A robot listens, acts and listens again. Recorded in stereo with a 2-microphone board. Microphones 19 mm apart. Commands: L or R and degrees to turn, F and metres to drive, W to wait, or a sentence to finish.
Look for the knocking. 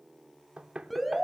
R75
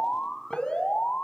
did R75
W
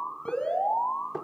Facing the knocking, 1 to 2 m away.